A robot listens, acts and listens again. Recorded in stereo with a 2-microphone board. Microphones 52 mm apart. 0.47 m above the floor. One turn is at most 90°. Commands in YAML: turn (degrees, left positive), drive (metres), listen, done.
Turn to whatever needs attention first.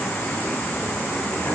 listen: true
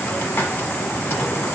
listen: true
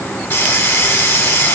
done: "I can't make out anything urgent, only a hiss."